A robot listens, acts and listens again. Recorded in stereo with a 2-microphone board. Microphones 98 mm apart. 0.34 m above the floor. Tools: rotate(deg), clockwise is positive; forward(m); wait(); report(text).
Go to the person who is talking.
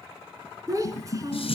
rotate(35)
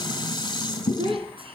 rotate(110)
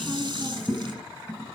wait()
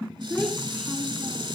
forward(1.0)
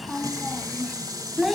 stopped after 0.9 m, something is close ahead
report("I am next to the child speaking.")